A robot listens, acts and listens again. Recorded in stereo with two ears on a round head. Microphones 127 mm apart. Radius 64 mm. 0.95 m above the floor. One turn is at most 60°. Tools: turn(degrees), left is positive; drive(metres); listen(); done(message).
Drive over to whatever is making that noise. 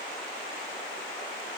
listen()
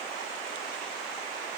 listen()
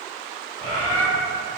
turn(degrees=-50)
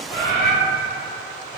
drive(metres=1.0)
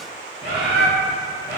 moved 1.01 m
turn(degrees=-15)
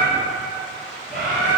drive(metres=1.0)
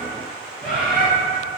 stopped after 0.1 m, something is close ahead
done("Arrived at the bird, straight ahead.")